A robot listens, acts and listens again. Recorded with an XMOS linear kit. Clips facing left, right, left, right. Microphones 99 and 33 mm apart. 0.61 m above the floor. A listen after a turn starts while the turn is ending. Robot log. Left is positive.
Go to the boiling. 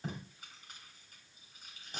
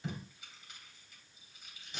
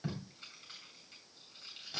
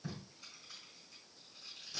cmd idle
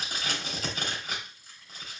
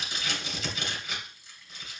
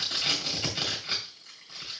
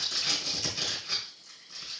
cmd idle
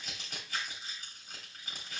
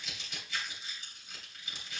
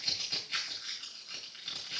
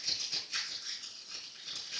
end: I can't make out boiling to turn to.